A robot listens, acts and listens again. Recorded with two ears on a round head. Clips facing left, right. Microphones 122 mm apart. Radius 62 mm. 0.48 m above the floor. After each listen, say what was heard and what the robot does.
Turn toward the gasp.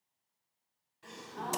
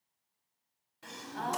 The gasp: about 65° right or 115° right. Turn 65° right.
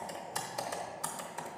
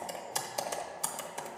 Keep listening.
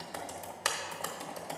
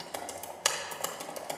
I heard a gasp, but can't make it out now. It was about straight ahead or 50° right.